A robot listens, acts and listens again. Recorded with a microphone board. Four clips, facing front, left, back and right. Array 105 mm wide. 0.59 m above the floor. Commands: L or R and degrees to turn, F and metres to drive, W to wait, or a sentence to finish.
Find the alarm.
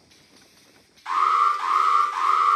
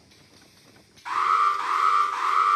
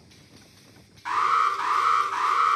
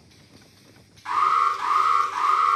R165
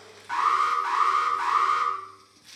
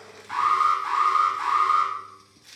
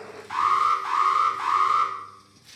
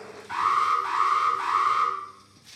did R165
L20
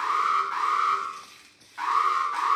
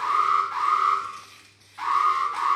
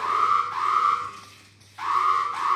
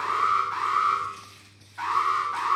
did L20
Found it: an alarm, straight ahead, over 4 m away.